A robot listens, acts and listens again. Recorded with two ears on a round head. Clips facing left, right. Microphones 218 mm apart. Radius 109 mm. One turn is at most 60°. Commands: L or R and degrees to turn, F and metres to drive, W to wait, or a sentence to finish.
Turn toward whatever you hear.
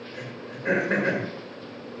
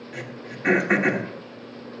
R60
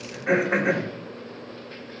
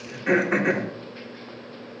R40
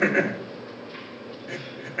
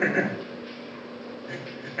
L10
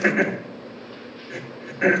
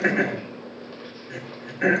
Found it: throat clearing, straight ahead.